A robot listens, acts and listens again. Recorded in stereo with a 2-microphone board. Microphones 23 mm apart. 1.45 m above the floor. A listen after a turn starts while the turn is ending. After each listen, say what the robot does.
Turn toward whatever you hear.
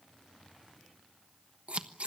Turn 60° right.
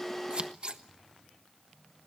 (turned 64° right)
Turn 50° right.
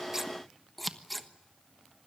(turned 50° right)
Found it: scissors, straight ahead.